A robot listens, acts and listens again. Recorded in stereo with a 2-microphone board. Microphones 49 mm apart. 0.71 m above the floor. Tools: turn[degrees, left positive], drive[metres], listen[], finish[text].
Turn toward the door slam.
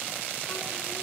Action: listen[]
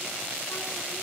Action: listen[]
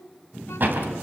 Thought: The door slam: about 45° right or 135° right.
Action: turn[-45]
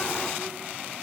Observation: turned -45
Action: listen[]
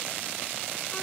Action: finish[I heard a door slam, but can't make it out now. It was about straight ahead or 90° right.]